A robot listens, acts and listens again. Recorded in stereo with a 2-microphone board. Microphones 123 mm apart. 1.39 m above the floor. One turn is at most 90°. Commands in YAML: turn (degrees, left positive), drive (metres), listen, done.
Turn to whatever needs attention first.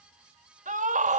turn: -90
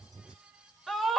done: "Found it: a scream, straight ahead, 2 to 4 m away."